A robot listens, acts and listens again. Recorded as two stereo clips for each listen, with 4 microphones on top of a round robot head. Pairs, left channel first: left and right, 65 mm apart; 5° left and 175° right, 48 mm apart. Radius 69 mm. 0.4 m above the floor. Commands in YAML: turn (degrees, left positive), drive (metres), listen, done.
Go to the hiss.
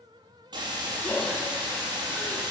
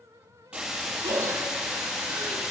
turn: -100
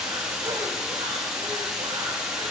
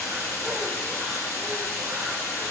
turn: -15
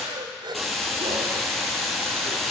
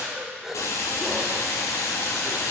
drive: 1.0
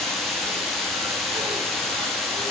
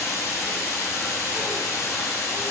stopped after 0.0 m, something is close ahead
done: "Something is in my way. I am facing the hiss but have not reached it."